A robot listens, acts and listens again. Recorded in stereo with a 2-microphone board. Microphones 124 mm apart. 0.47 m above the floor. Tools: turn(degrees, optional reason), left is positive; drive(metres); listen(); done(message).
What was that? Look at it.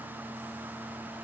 listen()
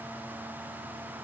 listen()
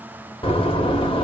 turn(degrees=45, reason="The door slam: about 45° left or 135° left.")
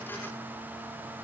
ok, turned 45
listen()
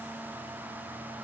done("I heard a door slam, but can't make it out now. It was about straight ahead or 90° left.")